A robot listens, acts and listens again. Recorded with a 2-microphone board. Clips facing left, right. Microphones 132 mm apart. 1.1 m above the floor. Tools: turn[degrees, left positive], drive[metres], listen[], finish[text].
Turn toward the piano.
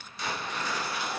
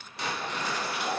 Action: listen[]
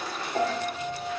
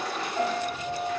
Thought: The piano: about 75° left or 105° left.
Action: turn[75]
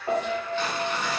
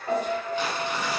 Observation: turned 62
Thought: So it is at 15° left.
Action: turn[15]
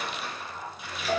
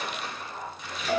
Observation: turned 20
Action: finish[Found it: a piano, straight ahead.]